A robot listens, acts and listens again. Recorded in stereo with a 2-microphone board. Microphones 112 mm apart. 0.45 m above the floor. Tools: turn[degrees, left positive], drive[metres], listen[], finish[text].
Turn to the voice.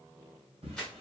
Action: listen[]
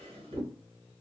Action: listen[]
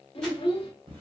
Thought: The child speaking: about 55° left or 125° left.
Action: turn[55]
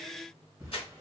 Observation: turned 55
Action: listen[]
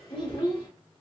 Thought: So it is at 55° left.
Action: turn[55]
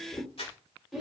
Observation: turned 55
Action: finish[Found it: a child speaking, straight ahead, 1 to 2 m away.]